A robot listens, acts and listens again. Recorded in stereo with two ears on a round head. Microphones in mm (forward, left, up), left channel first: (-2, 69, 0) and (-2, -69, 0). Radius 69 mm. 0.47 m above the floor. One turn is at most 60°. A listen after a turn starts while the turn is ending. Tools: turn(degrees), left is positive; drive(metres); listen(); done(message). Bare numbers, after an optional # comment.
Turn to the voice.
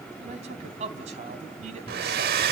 # The man speaking: about 45° right or 135° right.
turn(-45)
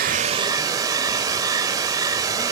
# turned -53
listen()
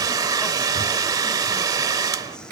listen()
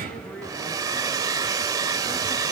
done("I heard a man speaking, but can't make it out now. It was about 10° left or 80° right.")